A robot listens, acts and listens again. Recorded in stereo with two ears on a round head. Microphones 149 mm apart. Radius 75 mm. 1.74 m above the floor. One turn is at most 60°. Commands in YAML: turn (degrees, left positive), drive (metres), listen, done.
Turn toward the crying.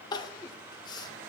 turn: 25
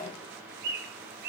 listen: true
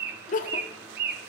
turn: 60
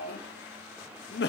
turn: 60
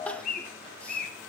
listen: true
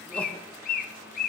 listen: true
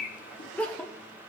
done: "Facing the crying, under 1 m away."